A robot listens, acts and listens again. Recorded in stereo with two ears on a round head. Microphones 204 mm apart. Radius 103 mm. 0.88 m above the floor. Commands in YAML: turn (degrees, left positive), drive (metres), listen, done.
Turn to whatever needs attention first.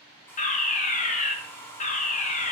turn: 35
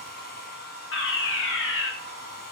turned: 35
turn: 105
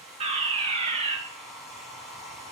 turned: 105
turn: -30
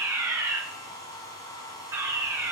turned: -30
turn: -15
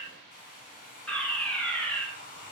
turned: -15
done: "Facing the fire alarm, 2 to 4 m away."